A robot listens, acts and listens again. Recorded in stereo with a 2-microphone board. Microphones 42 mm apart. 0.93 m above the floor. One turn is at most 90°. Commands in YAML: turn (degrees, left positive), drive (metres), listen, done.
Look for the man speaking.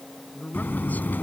turn: 45
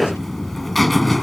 listen: true
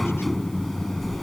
listen: true
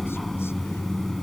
done: "I heard a man speaking, but can't make it out now. It was about straight ahead or 90° left."